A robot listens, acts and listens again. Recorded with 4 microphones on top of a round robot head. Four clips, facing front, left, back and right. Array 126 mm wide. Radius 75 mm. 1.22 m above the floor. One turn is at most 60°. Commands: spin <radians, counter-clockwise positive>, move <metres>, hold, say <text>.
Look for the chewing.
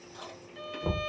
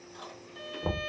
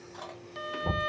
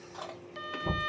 spin -1.05
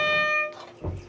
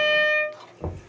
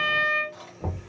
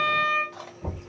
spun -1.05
spin -1.05
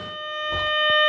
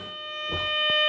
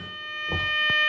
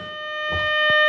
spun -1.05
spin -0.35
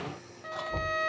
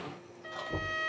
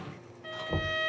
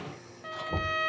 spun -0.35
hold
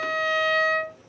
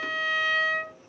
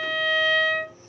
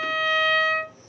say Facing where the chewing came from. I can't hear it now.